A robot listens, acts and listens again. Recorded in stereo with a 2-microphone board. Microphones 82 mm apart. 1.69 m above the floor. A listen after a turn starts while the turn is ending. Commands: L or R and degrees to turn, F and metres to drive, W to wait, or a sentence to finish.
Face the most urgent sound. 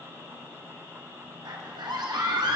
R65
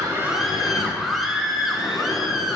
Facing the scream.